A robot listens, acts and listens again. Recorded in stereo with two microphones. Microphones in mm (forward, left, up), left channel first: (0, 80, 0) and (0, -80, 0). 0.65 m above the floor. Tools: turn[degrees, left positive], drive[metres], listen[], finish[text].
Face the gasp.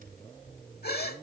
Thought: The gasp: about 75° left or 105° left.
Action: turn[75]
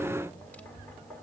Action: listen[]
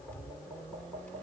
Action: finish[I heard a gasp, but can't make it out now. It was about straight ahead or 30° left.]